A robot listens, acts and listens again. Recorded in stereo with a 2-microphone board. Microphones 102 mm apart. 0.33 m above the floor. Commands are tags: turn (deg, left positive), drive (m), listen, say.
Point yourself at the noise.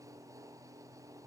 <listen/>
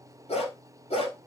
<turn deg="75"/>
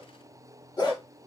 <turn deg="45"/>
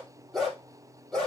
<say>Facing the dog barking.</say>